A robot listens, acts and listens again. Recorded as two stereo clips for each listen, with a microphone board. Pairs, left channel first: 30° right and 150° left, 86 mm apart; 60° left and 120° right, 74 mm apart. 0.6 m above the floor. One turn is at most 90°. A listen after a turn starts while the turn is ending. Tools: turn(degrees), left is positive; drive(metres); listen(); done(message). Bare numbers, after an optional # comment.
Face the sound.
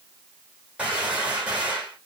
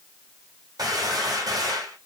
# The gunshot: 135° right.
turn(-90)
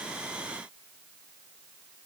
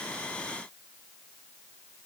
# Nothing new. It was at 45° right.
turn(-45)
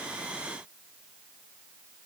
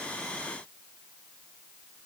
done("Facing where the gunshot came from. I can't hear it now.")